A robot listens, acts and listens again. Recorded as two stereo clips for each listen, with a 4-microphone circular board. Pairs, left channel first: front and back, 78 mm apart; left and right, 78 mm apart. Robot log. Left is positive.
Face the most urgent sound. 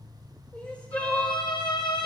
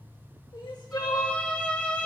note: The crying: 70° left.
cmd yaw +70
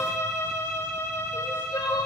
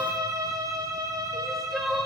end: Found it: crying, straight ahead, 1 to 2 m away.